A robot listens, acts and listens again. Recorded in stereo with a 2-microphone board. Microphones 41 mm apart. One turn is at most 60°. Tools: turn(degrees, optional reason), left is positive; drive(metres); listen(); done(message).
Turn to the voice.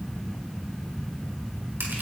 listen()
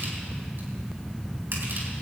listen()
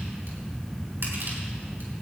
done("I can't make out anyone speaking to turn to.")